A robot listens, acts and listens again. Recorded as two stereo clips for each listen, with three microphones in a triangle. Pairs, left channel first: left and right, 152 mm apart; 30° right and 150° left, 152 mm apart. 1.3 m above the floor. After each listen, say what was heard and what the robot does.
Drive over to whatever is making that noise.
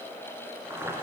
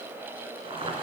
The boiling: 160° right. Turn 160° right.
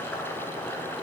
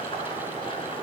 The boiling is now 15° left. Turn 15° left.
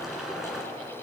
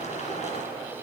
Drive 1.0 m forward.
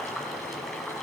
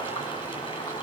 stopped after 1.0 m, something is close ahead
I am next to the boiling.